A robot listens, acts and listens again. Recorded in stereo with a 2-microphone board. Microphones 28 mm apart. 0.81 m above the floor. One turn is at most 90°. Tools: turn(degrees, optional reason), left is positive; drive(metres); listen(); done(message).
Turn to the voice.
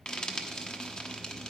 listen()
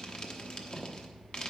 listen()
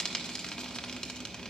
done("I can't make out anyone speaking, only frying.")